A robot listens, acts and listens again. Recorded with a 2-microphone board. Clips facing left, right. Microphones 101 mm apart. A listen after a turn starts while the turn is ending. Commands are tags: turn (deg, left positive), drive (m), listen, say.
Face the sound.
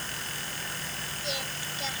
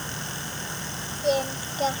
<turn deg="-45"/>
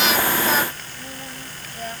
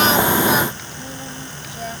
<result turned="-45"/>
<listen/>
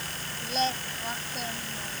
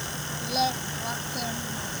<say>Facing the singing.</say>